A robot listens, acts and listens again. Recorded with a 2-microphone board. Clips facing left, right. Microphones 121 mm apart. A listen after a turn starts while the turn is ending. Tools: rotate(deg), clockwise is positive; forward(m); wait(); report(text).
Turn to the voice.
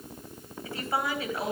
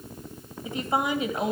rotate(20)
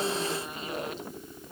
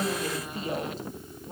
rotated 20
rotate(140)
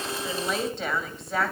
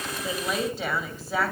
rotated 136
report("Facing the woman speaking, 2 to 4 m away.")